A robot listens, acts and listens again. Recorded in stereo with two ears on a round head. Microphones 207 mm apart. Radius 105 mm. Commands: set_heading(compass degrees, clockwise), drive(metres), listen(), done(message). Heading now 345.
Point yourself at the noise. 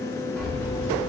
set_heading(315)
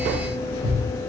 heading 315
set_heading(190)
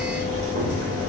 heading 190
set_heading(250)
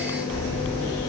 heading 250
set_heading(260)
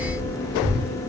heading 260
done("Facing the keys jangling, 2 to 4 m away.")